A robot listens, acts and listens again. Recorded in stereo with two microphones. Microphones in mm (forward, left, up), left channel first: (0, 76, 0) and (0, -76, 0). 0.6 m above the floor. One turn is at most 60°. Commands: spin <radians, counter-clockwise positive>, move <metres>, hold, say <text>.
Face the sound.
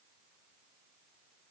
hold
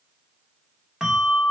spin -0.52
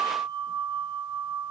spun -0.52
spin -1.05
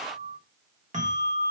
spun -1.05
spin -1.05
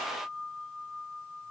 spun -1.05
spin -0.26
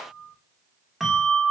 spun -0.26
say Found it: a bell, straight ahead, 1 to 2 m away.